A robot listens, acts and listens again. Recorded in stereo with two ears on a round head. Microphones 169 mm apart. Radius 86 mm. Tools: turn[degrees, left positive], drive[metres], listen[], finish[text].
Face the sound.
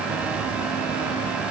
Action: listen[]
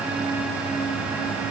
Action: listen[]
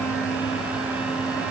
Action: finish[I can't make out anything.]